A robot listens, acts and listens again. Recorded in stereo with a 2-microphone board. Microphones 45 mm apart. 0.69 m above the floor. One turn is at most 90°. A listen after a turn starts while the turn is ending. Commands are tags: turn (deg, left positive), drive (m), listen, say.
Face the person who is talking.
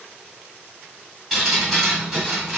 <listen/>
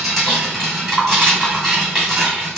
<listen/>
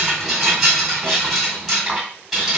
<say>I can't make out anyone speaking to turn to.</say>